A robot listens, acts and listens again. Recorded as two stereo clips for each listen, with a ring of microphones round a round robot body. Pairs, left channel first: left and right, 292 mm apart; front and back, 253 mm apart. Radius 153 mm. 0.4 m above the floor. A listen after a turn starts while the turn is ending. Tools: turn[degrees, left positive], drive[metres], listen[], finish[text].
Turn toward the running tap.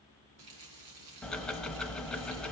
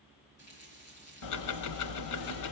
Thought: The running tap: 65° right.
Action: turn[-65]
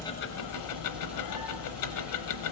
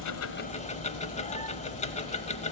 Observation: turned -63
Action: listen[]
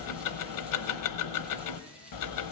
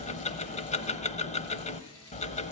Action: listen[]
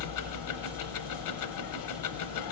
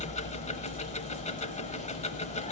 Action: finish[I heard a running tap from this way, but can't make it out now.]